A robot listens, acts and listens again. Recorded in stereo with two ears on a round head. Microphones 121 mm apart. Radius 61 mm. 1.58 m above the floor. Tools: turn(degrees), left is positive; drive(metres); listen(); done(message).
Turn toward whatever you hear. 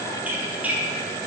turn(degrees=-30)
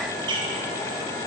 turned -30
turn(degrees=-140)
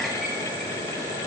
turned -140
listen()
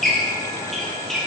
done("Found it: a squeak, straight ahead, 1 to 2 m away.")